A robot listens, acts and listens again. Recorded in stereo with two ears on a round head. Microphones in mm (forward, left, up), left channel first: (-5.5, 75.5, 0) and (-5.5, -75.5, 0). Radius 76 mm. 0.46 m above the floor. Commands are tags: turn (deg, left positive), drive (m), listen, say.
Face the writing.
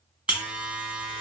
<listen/>
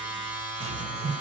<turn deg="-90"/>
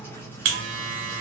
<turn deg="15"/>
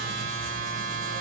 <listen/>
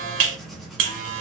<say>Facing the writing, 1 to 2 m away.</say>